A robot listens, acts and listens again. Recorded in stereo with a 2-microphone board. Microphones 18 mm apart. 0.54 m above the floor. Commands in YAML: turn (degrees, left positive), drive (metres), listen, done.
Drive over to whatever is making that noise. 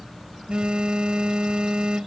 turn: -65
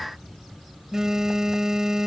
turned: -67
turn: -40
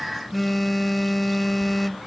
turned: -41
drive: 1.0
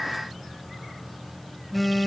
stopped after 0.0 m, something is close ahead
done: "Something is in my way. I am facing the phone buzzing but have not reached it."